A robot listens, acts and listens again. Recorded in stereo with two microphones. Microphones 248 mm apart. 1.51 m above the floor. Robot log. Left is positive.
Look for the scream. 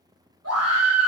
cmd yaw -90
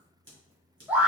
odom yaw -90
end: Facing the scream, 1 to 2 m away.